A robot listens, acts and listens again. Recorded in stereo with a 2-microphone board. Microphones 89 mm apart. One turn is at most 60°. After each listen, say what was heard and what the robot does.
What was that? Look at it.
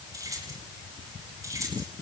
The keys jangling: about 35° right or 145° right. Turn 35° right.
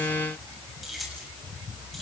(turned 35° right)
Found it: keys jangling, straight ahead, over 4 m away.